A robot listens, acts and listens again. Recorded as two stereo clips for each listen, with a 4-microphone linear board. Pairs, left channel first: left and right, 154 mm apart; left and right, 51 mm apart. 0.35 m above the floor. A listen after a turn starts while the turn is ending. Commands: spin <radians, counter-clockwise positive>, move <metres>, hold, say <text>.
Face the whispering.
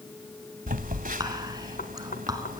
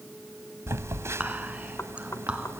spin -0.44
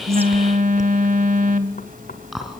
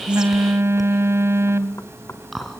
say Found it: whispering, straight ahead.